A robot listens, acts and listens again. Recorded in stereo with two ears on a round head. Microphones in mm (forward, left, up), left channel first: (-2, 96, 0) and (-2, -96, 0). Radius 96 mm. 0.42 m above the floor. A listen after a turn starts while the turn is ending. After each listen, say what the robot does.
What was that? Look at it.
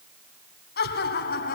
Turn 45° left.
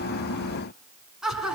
Facing the laughter.